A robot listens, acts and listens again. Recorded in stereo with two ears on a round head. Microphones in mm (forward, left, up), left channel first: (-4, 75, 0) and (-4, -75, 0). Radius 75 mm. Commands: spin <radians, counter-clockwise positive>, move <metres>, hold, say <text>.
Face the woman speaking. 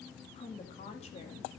spin 0.70
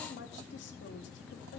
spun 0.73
spin 1.75
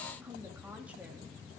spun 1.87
spin -0.17
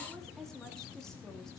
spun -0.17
say Facing the woman speaking.